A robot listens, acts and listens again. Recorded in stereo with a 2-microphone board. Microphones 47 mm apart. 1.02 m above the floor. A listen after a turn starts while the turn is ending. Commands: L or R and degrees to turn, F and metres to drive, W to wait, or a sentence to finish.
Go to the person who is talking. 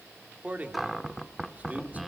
R35
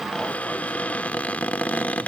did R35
W
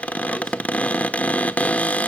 W
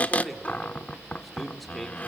F1.0
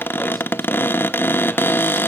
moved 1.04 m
W
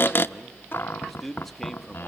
F1.0
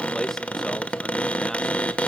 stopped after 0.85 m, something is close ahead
W
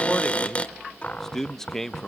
L10
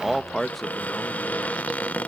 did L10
I am next to the man speaking.